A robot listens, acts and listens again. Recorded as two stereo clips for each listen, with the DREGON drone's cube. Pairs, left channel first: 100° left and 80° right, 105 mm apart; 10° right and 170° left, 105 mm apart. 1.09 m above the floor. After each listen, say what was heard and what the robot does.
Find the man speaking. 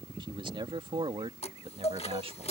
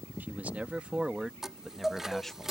The man speaking: 95° right. Turn 95° right.
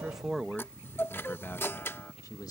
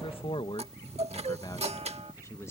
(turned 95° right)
The man speaking is now 50° left. Turn 50° left.
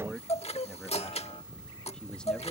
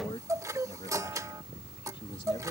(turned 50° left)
The man speaking is now 20° left. Turn 20° left.
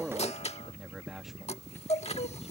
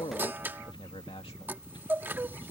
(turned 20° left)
Found it: a man speaking, straight ahead.